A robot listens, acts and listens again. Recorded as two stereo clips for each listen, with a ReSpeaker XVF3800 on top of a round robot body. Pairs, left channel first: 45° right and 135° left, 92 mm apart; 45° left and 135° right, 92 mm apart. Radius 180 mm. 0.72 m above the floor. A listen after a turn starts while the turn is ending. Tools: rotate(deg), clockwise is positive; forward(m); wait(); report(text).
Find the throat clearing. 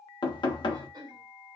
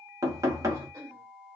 rotate(-175)
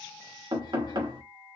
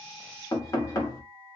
wait()
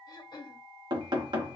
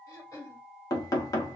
report("Facing the throat clearing, 1 to 2 m away.")